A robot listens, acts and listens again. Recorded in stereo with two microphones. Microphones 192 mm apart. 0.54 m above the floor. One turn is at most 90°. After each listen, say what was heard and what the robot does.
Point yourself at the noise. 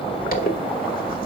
The zipper: about 55° left or 125° left. Turn 55° left.
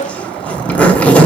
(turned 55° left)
So it is at 10° left. Turn 10° left.
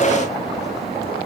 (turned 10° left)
Keep listening.
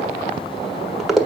Found it: a zipper, straight ahead.